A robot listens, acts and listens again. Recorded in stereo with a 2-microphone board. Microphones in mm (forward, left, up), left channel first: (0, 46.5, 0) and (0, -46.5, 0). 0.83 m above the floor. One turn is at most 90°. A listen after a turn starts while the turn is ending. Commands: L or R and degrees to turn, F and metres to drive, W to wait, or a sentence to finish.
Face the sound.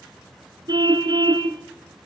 R50
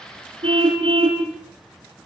R80
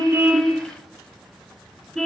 Facing the car horn.